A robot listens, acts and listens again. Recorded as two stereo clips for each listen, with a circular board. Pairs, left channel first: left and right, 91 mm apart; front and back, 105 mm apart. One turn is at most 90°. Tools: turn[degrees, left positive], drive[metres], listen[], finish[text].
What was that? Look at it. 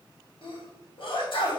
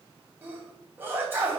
Thought: The sneeze: 110° left.
Action: turn[90]
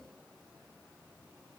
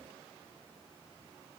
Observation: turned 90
Thought: Nothing new. It was at 20° left.
Action: turn[20]
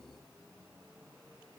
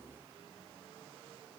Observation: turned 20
Action: finish[I heard a sneeze from this way, but can't make it out now.]